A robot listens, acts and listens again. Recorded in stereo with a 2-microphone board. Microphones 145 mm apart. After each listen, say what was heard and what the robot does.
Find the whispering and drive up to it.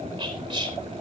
The whispering: about 35° right or 145° right. Turn 35° right.
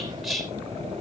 Drive 1.0 m forward.
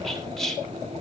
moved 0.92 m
Drive 1.0 m forward.
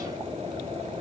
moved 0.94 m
Keep listening.
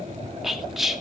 Drive 1.0 m forward.
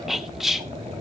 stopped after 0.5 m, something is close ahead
Arrived at the whispering, straight ahead.